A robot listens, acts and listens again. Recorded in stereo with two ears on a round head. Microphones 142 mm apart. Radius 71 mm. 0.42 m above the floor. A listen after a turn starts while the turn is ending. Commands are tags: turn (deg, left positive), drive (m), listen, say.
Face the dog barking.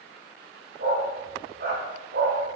<turn deg="-65"/>
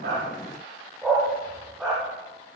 <say>Found it: a dog barking, straight ahead, over 4 m away.</say>